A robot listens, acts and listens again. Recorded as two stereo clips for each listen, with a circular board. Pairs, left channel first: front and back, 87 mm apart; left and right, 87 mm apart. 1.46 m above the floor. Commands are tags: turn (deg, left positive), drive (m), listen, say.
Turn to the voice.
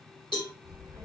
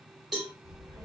<turn deg="-135"/>
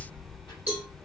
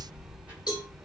<turn deg="-20"/>
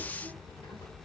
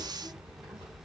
<say>Found it: a child speaking, straight ahead.</say>